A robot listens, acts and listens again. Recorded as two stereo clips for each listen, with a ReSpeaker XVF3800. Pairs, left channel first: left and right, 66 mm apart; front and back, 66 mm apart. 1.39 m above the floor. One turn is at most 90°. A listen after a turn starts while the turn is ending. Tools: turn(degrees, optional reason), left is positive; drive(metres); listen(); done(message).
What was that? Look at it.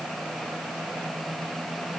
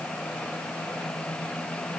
listen()
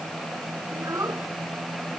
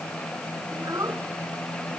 turn(degrees=-90, reason="The child speaking: 140° right.")
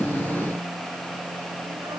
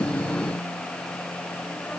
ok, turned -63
turn(degrees=-80, reason="Nothing new. It was at 80° right.")
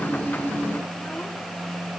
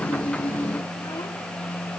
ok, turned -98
turn(degrees=20, reason="Nothing new. It was at 20° left.")
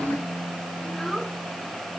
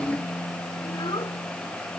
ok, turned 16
done("Found it: a child speaking, straight ahead.")